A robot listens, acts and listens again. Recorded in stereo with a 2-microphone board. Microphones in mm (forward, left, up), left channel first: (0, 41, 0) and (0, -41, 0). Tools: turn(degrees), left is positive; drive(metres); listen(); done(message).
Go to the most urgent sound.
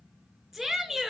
turn(degrees=30)
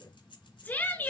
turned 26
turn(degrees=155)
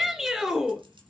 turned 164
turn(degrees=-10)
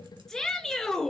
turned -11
drive(metres=1.0)
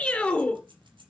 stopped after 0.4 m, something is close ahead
turn(degrees=10)
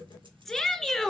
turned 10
done("Blocked. The shout is further on, straight ahead.")